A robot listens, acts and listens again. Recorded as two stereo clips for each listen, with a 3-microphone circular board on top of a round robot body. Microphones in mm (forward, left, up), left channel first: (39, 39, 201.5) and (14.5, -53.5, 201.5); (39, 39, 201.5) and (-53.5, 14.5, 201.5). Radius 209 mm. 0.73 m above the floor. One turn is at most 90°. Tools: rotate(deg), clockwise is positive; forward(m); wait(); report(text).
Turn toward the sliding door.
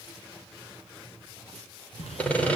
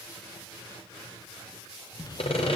rotate(-65)
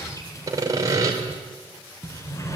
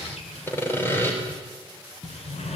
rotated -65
rotate(-15)
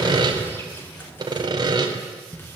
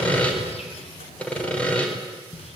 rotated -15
report("Facing the sliding door, 2 to 4 m away.")